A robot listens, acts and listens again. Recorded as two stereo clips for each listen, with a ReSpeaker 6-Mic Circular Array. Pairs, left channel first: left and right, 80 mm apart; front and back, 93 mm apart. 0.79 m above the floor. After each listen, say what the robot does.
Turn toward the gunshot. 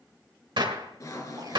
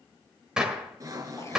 Turn 100° right.
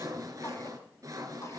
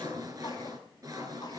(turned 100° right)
Facing where the gunshot came from. I can't hear it now.